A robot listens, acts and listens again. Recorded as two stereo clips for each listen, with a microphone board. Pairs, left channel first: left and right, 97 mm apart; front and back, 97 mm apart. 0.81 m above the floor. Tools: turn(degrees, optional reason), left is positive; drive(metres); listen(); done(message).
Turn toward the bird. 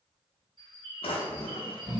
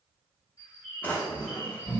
turn(degrees=-60, reason="The bird: 60° right.")
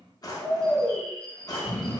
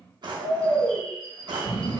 turn(degrees=10, reason="The bird is now 10° left.")
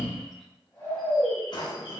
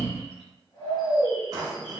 listen()
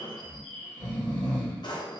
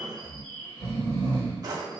done("Found it: a bird, straight ahead, 1 to 2 m away.")